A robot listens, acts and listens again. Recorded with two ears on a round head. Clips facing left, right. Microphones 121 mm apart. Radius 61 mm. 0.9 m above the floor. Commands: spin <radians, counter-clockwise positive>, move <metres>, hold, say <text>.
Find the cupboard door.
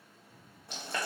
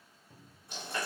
spin -0.61
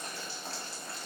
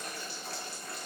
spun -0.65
hold
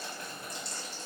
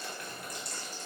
hold
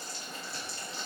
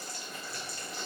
say I heard a cupboard door, but can't make it out now. It was about 5° left or 110° right.